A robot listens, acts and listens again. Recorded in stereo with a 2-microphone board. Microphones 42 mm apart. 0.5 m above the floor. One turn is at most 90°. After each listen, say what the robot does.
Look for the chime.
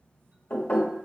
Keep listening.
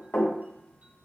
Keep listening.
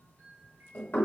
Turn 40° right.
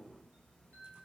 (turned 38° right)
Turn 90° right.
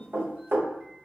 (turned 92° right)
Turn 10° right.
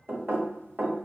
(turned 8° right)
Keep listening.
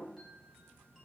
I heard a chime from this way, but can't make it out now.